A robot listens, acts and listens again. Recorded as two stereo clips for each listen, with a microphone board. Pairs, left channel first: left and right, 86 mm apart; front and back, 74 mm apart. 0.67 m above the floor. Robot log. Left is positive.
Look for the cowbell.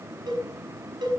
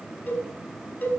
note: The cowbell: 65° right.
cmd yaw -65
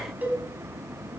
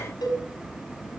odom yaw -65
note: The cowbell is now 20° right.
cmd yaw -20
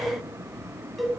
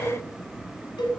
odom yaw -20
end: Facing the cowbell, over 4 m away.